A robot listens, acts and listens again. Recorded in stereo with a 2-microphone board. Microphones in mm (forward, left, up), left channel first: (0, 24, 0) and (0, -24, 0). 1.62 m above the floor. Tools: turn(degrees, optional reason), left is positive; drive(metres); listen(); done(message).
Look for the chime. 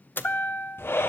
turn(degrees=40, reason="The chime: about 40° left or 140° left.")
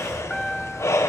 done("Found it: a chime, straight ahead, under 1 m away.")